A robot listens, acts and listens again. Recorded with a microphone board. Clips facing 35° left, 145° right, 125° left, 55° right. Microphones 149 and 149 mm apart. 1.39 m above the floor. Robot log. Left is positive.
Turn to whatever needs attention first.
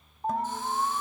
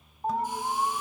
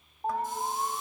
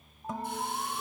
note: The alarm: 130° left.
cmd yaw +130
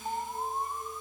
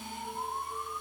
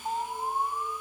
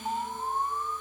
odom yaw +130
note: The alarm is now 40° left.
cmd yaw +40
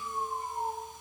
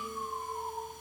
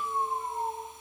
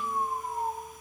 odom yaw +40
note: The alarm is now 20° left.
cmd yaw +20
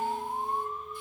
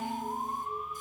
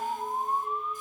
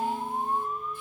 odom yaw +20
end: Found it: an alarm, straight ahead.